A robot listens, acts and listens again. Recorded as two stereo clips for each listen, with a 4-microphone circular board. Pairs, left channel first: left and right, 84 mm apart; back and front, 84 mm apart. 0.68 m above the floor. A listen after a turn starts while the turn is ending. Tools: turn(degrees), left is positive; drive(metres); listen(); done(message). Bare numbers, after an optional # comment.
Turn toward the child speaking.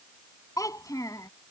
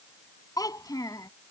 # The child speaking: 135° left.
turn(135)
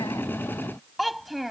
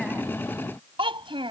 done("Found it: a child speaking, straight ahead.")